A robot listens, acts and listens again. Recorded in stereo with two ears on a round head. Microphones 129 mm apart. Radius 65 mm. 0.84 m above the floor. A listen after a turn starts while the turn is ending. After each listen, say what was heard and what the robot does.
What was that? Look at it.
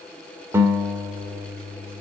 The guitar: about 20° right or 160° right. Turn 20° right.
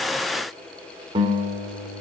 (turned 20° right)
So it is at 145° right. Turn 145° right.
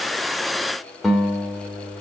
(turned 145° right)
Facing the guitar.